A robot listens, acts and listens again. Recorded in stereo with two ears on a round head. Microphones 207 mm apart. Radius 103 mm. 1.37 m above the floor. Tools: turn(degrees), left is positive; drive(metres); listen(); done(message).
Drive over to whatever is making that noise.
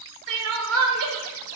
turn(degrees=-65)
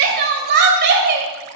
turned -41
turn(degrees=-55)
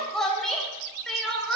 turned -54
drive(metres=1.0)
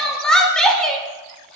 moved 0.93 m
drive(metres=1.0)
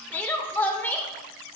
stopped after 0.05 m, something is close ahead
turn(degrees=10)
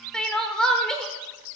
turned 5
done("I am next to the crying.")